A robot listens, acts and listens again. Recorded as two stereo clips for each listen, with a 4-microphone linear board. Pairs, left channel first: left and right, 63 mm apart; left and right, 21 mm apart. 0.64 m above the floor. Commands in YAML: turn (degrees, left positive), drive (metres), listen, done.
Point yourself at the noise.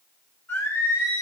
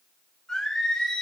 turn: 45
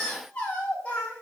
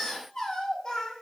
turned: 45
turn: 25
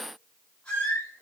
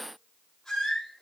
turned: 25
turn: 20
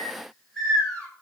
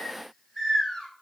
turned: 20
turn: 10
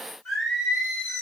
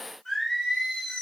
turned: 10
done: "Facing the singing, 2 to 4 m away."